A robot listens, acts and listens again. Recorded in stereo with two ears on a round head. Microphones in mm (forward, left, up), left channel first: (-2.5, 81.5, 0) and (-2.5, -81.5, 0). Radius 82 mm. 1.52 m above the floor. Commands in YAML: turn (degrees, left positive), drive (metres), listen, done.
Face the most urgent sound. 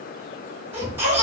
turn: -30
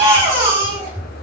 turn: -135
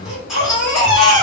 done: "Found it: a baby crying, straight ahead, 1 to 2 m away."